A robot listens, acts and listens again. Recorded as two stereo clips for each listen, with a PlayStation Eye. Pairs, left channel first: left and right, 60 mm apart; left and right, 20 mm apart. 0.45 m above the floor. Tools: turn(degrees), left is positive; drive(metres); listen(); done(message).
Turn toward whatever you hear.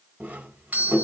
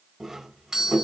turn(degrees=-25)
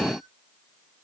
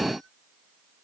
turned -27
listen()
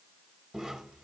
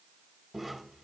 listen()
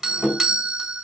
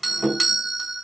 done("Found it: a doorbell, straight ahead, 2 to 4 m away.")